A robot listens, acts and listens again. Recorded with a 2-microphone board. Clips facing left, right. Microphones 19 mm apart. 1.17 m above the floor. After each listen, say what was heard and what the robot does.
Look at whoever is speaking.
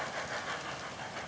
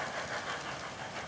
Keep listening.
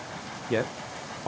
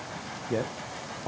The man speaking: about 65° left or 115° left. Turn 65° left.
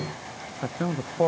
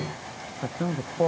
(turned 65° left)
So it is at 25° left. Turn 25° left.
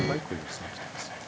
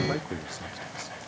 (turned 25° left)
Found it: a man speaking, straight ahead, 1 to 2 m away.